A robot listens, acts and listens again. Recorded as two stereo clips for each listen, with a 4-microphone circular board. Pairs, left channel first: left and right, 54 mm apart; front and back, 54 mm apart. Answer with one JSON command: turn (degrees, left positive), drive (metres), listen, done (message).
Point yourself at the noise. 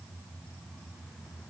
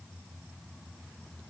{"listen": true}
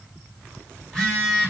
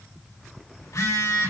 {"done": "Facing the phone buzzing, over 4 m away."}